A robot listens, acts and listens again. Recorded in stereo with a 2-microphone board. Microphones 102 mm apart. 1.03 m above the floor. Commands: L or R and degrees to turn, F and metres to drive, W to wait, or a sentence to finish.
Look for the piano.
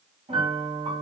R70
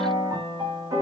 R40
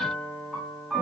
Facing the piano.